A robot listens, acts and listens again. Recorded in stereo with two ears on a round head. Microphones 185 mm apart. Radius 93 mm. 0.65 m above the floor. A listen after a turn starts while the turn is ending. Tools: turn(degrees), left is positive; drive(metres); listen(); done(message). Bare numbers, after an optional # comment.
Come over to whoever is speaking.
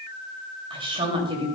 # The woman speaking: about 25° right or 155° right.
turn(-25)
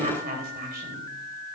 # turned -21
# So it is at 130° right.
turn(-130)
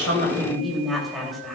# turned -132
drive(1.0)
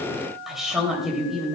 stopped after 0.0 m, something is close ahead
done("Blocked. The woman speaking is further on, straight ahead.")